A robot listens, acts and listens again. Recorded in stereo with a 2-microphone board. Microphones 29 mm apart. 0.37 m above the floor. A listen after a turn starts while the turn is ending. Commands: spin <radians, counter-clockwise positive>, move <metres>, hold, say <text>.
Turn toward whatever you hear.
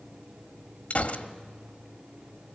spin 0.87
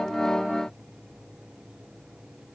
hold
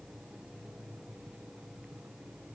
say I heard a gunshot, but can't make it out now. It was about straight ahead or 80° left.